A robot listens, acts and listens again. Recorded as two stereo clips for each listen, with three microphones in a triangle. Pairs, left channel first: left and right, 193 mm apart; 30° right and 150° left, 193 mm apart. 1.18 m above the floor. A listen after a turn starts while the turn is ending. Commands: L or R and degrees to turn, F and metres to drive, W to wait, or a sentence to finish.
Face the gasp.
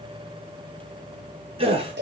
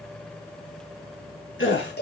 R30
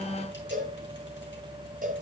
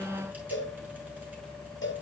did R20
R10
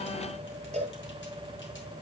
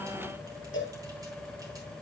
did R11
I heard a gasp from this way, but can't make it out now.